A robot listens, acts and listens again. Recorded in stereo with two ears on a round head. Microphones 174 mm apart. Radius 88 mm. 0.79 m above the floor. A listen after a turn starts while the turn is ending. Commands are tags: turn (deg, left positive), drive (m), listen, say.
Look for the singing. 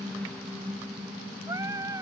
<turn deg="-15"/>
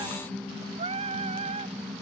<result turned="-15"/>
<turn deg="-35"/>
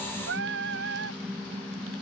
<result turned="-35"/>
<turn deg="-115"/>
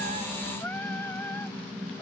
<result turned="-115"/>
<turn deg="10"/>
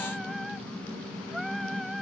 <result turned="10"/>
<say>Facing the singing.</say>